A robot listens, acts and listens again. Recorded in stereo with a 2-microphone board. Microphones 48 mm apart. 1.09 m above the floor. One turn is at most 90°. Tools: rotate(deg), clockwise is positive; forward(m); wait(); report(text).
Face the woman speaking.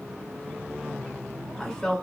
rotate(-30)
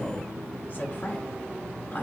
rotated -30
rotate(-90)
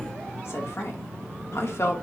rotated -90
rotate(-70)
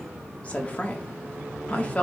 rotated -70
rotate(-30)
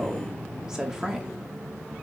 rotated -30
rotate(15)
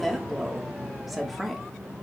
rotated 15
report("Found it: a woman speaking, straight ahead, 1 to 2 m away.")